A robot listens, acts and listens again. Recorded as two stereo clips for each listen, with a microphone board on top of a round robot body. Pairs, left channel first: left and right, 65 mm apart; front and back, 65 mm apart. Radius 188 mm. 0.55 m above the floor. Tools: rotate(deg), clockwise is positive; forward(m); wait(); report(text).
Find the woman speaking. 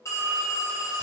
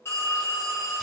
wait()
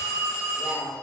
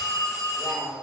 rotate(-110)
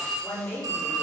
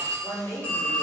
rotate(-35)
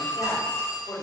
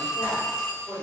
rotate(-30)
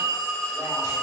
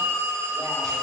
wait()
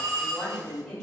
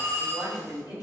rotate(-10)
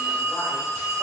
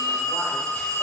wait()
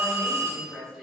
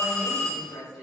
report("Found it: a woman speaking, straight ahead.")